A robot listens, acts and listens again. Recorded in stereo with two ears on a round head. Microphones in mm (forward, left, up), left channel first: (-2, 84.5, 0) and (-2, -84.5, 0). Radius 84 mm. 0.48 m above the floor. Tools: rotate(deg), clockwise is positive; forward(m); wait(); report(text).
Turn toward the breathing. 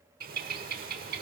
wait()
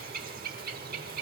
wait()
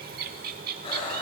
rotate(-30)
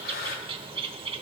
rotate(-120)
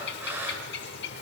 rotate(15)
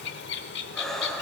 report("Facing the breathing, 1 to 2 m away.")